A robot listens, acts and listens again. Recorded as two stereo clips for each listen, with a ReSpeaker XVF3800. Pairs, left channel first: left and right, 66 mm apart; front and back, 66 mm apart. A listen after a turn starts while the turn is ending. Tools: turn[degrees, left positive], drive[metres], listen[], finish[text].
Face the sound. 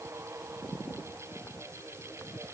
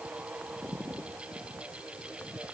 Action: listen[]
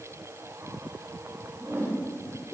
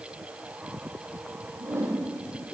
Thought: The whoosh: 140° right.
Action: turn[-140]
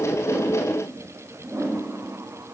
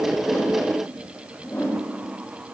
Thought: The whoosh is now 50° right.
Action: turn[-50]
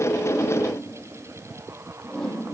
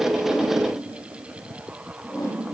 Thought: The whoosh is now 10° left.
Action: turn[10]
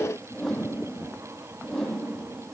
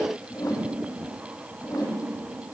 Action: finish[Facing the whoosh.]